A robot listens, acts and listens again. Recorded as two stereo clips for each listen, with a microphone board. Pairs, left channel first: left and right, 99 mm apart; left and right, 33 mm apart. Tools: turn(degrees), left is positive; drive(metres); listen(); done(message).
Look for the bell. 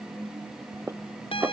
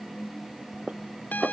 turn(degrees=65)
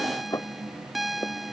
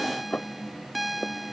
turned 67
done("Found it: a bell, straight ahead.")